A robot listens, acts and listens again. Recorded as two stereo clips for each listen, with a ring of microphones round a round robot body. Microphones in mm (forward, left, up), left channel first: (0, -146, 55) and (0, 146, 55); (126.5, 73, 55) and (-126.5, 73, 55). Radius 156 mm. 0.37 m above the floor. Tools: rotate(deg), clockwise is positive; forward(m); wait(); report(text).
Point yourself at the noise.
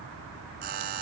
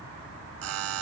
rotate(-150)
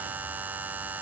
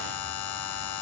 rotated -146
report("Found it: a buzzer, straight ahead.")